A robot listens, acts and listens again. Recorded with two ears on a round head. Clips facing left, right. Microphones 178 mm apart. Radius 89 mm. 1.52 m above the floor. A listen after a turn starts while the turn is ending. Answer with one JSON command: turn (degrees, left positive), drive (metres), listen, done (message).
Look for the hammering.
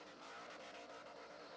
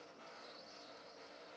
{"listen": true}
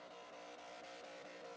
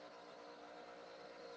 {"listen": true}
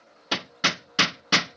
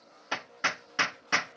{"turn": 45}
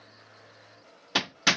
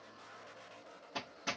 {"turn": 95}
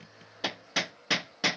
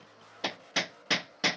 {"done": "Facing the hammering."}